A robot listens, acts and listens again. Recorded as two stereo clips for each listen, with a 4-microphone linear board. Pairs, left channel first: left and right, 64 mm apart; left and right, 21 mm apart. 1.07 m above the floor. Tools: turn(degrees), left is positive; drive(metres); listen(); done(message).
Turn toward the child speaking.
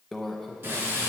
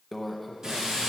listen()
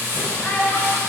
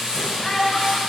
turn(degrees=30)
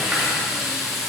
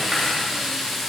listen()
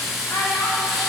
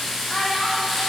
turn(degrees=125)
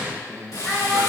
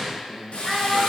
turn(degrees=15)
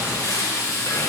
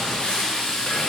listen()
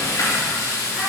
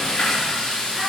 listen()
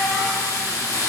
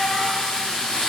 done("Found it: a child speaking, straight ahead.")